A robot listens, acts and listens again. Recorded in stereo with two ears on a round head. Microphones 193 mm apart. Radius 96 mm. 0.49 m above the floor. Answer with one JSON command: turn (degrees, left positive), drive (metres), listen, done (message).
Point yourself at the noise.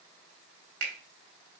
{"turn": -70}
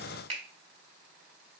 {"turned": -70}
{"turn": -30}
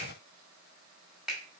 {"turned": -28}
{"done": "Facing the finger snap, 1 to 2 m away."}